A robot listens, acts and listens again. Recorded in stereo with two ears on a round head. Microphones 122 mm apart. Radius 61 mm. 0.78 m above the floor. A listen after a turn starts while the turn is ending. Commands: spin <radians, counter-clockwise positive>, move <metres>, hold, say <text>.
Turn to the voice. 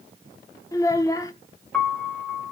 spin 0.44
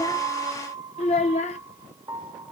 spin 2.27
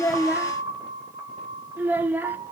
spin -0.17
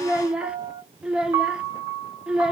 say Found it: a child speaking, straight ahead.